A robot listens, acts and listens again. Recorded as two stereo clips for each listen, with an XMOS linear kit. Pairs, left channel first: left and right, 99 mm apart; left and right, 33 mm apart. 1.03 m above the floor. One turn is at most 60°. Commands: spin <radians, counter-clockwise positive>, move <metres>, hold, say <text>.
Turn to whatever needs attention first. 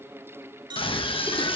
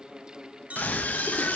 spin 1.05
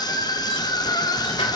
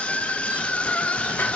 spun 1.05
spin 0.79
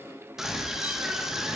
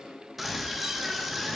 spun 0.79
say Found it: a scream, straight ahead, 1 to 2 m away.